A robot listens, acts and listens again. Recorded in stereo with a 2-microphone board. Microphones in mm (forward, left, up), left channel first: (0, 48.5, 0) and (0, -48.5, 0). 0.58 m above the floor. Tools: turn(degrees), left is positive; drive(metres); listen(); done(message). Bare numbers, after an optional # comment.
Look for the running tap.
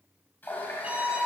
# The running tap: about 20° left or 160° left.
turn(20)
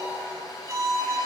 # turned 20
# So it is at 140° left.
turn(140)
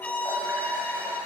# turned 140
listen()
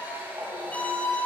# The running tap is now 20° right.
turn(-20)
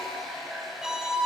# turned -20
done("Facing the running tap, 2 to 4 m away.")